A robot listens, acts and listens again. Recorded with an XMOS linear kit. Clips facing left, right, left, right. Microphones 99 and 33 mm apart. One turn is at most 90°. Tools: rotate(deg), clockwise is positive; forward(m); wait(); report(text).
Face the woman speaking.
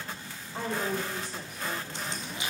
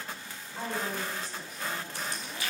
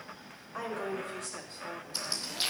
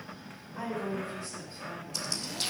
rotate(-75)
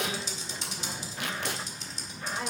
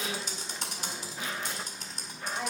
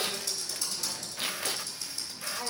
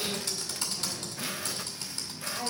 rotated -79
report("Facing the woman speaking, 2 to 4 m away.")